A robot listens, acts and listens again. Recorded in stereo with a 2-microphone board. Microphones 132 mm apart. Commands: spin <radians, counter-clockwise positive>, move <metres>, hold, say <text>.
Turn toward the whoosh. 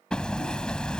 hold
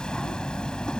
hold
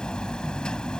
say I can't make out a whoosh, only hammering.